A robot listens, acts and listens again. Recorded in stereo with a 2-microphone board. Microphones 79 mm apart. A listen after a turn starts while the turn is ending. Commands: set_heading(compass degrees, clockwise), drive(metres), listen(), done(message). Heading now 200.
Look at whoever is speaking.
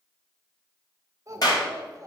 set_heading(240)
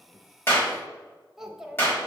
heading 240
done("Facing the child speaking.")